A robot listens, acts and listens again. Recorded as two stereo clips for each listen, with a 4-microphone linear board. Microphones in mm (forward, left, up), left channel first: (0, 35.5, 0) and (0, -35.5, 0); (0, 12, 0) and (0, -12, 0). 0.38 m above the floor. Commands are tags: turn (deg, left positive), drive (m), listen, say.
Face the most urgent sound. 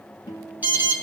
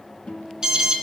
<turn deg="-25"/>
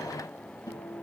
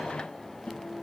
<listen/>
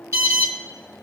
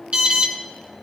<turn deg="-130"/>
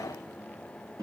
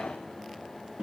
<listen/>
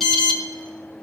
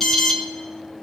<say>Found it: an alarm, straight ahead, 2 to 4 m away.</say>